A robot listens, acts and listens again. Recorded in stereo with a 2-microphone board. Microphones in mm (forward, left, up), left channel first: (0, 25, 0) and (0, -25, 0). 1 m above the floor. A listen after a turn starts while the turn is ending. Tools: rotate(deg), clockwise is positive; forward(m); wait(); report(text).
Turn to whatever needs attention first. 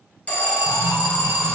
rotate(-30)
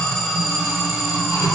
report("Found it: an alarm, straight ahead, under 1 m away.")